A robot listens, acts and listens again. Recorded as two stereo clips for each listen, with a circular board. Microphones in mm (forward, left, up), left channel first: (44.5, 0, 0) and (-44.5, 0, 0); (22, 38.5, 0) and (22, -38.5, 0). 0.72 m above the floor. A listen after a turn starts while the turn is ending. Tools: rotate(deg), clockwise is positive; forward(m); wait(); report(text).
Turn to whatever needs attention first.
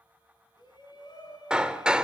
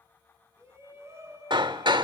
rotate(35)
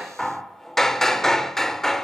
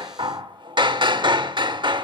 wait()
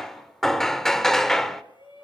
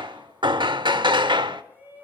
rotate(20)
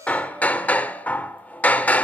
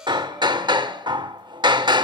wait()
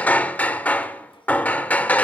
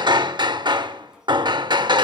wait()
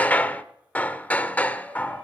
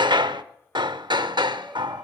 report("Facing where the shout came from. I can't hear it now.")